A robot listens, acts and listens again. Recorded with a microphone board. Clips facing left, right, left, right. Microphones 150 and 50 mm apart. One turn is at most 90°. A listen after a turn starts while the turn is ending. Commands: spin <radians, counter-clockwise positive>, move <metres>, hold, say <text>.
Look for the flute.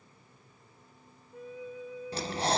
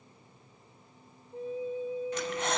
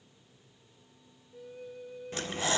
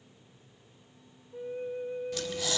spin -0.52
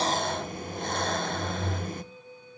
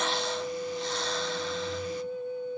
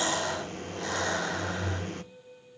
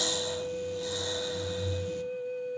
spin -1.57
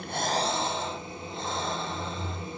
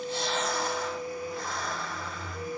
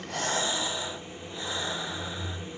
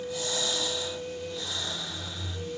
spin -0.52
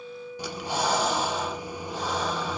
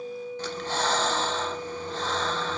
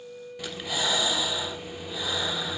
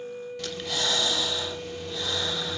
spin -0.44
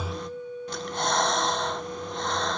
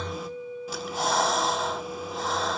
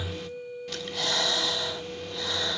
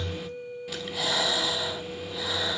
say Facing the flute.